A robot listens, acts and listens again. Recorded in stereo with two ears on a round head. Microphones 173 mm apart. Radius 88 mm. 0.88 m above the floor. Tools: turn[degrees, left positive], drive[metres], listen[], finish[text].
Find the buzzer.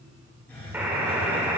Action: turn[-30]
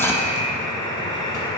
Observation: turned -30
Thought: So it is at 20° left.
Action: turn[20]
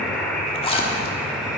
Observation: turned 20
Action: finish[Facing the buzzer, 1 to 2 m away.]